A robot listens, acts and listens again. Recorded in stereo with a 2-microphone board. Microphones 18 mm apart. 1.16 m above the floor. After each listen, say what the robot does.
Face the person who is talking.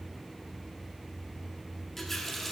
Keep listening.
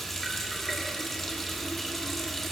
Keep listening.
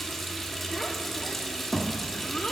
Turn 45° left.
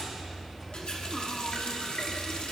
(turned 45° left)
Keep listening.
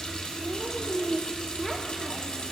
Found it: a child speaking, straight ahead, 1 to 2 m away.